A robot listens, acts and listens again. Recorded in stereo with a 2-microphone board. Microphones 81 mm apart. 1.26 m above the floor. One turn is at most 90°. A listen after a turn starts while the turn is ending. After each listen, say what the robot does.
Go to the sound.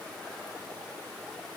Keep listening.
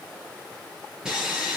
Turn 30° right.
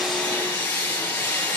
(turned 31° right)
Turn 20° left.
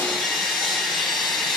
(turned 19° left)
Drive 1.0 m forward.
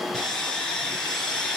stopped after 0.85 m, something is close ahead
Blocked. The sawing is further on, straight ahead.